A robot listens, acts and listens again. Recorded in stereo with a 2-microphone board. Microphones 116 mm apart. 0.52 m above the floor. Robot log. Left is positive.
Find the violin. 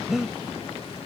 cmd idle
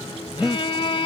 note: The violin: about 50° left or 130° left.
cmd yaw +50
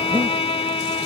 note: So it is at 70° left.
cmd yaw +70
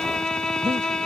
end: Found it: a violin, straight ahead.